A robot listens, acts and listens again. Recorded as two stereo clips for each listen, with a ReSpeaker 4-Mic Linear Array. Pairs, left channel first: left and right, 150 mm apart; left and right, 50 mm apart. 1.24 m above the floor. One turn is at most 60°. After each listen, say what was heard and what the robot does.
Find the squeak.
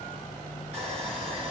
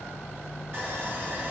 Keep listening.
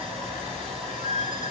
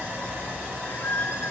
The squeak: about 50° left or 130° left. Turn 50° left.
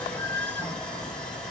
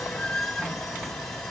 So it is at 10° left. Turn 10° left.
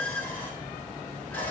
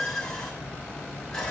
Facing the squeak.